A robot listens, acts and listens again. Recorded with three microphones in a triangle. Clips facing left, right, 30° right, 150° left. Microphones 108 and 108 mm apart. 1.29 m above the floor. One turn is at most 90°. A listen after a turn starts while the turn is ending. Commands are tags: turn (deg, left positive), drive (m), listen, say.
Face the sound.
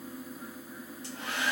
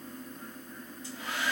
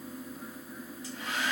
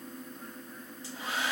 <turn deg="90"/>
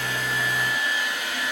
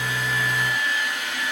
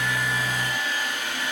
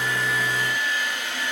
<turn deg="10"/>
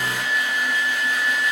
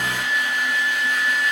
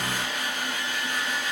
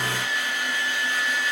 <say>Found it: a hair dryer, straight ahead.</say>